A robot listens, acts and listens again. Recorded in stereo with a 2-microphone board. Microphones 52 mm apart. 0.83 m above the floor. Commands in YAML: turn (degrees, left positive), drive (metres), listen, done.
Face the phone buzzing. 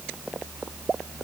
listen: true
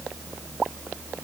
listen: true
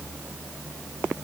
done: "I can't make out a phone buzzing."